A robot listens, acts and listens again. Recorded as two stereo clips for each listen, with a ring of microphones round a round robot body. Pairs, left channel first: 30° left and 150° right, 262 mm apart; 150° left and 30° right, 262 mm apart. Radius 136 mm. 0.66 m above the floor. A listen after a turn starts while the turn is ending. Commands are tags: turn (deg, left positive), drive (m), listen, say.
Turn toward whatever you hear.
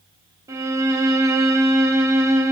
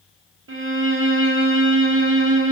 <turn deg="-70"/>
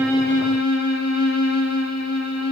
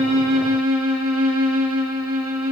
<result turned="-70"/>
<say>Found it: a violin, straight ahead, 1 to 2 m away.</say>